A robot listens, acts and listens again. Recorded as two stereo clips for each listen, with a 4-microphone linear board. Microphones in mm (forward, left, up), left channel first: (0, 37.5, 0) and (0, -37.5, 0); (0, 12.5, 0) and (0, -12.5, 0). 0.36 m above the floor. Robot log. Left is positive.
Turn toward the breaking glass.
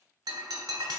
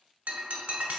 cmd yaw -90
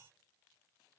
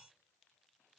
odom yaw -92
end: Facing where the breaking glass came from. I can't hear it now.